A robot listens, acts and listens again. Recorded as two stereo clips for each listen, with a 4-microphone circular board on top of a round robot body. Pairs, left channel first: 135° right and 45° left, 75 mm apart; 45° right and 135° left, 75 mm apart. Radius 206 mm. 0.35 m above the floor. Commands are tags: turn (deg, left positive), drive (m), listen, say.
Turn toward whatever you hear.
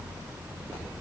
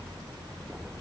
<listen/>
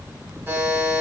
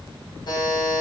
<turn deg="-20"/>
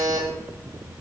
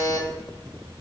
<say>Facing the buzzer.</say>